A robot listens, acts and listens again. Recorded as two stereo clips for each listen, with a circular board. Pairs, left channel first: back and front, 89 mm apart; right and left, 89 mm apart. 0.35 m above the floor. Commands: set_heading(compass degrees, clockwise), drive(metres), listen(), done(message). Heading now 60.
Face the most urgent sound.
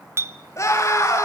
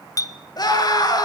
set_heading(185)
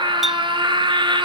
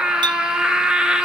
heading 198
set_heading(188)
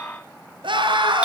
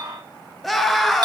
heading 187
done("Found it: a scream, straight ahead, over 4 m away.")